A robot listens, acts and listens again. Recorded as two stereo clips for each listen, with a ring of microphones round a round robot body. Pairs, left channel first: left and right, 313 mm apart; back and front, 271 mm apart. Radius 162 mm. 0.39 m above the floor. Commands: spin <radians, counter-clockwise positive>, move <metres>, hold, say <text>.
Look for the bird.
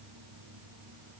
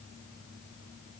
hold
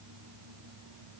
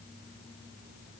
hold
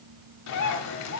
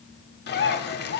spin 2.18
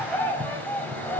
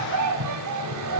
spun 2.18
say Found it: a bird, straight ahead.